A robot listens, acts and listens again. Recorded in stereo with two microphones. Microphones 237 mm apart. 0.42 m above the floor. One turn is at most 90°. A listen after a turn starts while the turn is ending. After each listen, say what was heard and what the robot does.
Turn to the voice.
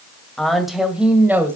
Turn 30° right.
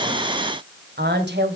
So it is at 130° right. Turn 90° right.
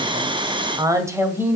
The woman speaking is now 10° right. Turn 10° right.
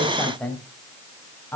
The woman speaking is now 10° left. Turn 10° left.
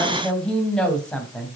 Facing the woman speaking, 2 to 4 m away.